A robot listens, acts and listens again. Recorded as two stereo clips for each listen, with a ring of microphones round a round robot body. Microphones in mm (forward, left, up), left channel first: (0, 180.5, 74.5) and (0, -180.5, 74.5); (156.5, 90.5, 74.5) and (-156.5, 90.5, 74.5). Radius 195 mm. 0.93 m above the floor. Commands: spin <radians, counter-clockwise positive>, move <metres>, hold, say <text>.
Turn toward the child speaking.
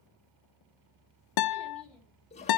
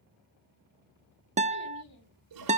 say Facing the child speaking.